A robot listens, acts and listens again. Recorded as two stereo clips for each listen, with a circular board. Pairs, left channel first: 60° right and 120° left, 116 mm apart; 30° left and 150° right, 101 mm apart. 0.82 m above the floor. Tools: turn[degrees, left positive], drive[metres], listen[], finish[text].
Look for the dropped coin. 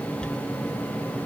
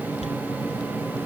Thought: The dropped coin: 25° left.
Action: turn[25]
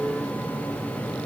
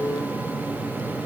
Action: finish[I heard a dropped coin from this way, but can't make it out now.]